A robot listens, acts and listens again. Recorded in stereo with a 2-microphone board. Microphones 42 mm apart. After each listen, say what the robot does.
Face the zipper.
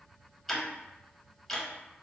Keep listening.
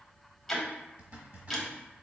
Turn 40° right.
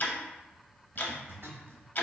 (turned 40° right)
Turn 95° right.
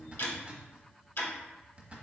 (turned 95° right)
Turn 30° right.
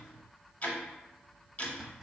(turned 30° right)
Facing the zipper.